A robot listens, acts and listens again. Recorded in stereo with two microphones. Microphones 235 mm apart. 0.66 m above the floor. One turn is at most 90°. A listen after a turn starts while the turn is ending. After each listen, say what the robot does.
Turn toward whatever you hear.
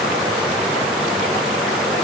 Keep listening.
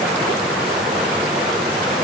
Keep listening.
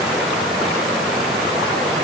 I can't make out anything to turn to.